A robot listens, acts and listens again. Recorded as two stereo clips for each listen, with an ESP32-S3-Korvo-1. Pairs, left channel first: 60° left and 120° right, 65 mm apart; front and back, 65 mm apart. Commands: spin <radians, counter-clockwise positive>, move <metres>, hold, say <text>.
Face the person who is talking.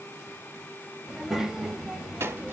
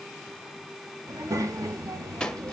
spin 2.71
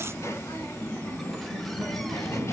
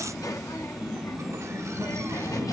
spin 0.35
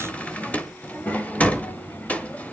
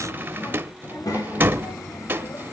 say Found it: a child speaking, straight ahead, 1 to 2 m away.